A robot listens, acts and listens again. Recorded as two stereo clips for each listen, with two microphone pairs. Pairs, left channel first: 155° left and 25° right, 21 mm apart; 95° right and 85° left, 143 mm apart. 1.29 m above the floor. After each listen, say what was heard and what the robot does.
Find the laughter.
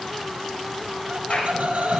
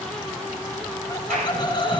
The laughter: 40° right. Turn 40° right.
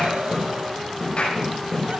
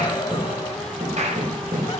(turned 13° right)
Nothing new. It was at 25° right. Turn 25° right.
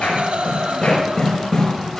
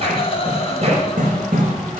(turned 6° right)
The laughter is now 50° right. Turn 50° right.
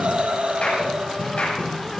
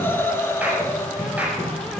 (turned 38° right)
The laughter is now 25° right. Turn 25° right.
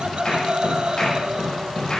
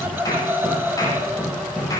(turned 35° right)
The laughter is now 15° left. Turn 15° left.
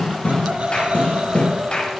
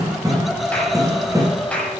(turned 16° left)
Found it: laughter, straight ahead.